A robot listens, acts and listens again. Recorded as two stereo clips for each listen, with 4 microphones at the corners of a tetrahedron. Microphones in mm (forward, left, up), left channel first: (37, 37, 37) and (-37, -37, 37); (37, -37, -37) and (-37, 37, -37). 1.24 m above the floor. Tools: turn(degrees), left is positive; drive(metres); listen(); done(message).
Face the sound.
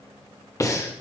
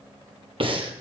turn(degrees=105)
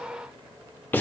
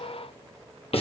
turn(degrees=-25)
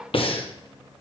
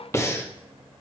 turn(degrees=20)
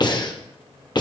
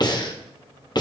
done("Found it: breathing, straight ahead.")